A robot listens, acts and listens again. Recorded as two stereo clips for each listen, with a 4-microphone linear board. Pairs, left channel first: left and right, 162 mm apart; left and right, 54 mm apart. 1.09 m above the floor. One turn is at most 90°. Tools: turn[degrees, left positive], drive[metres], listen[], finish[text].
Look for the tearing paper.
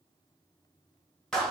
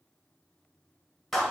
Action: listen[]
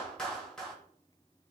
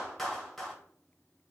Action: listen[]
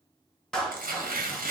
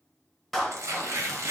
Thought: The tearing paper: about 60° right or 120° right.
Action: turn[-60]
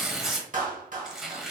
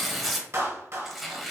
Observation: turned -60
Action: finish[Found it: tearing paper, straight ahead.]